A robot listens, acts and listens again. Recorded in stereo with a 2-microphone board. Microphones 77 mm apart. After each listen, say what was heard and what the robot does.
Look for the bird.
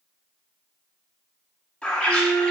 Turn 30° left.
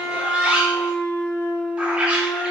So it is at 15° right. Turn 15° right.
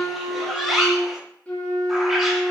Found it: a bird, straight ahead.